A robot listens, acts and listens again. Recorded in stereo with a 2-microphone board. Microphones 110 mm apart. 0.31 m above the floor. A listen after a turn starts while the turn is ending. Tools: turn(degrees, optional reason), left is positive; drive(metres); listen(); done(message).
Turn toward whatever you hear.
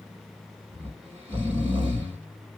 turn(degrees=-45, reason="The snoring: about 45° right or 135° right.")
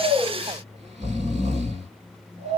turn(degrees=-90, reason="So it is at 90° right.")
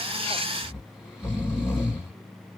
done("Found it: snoring, straight ahead, 2 to 4 m away.")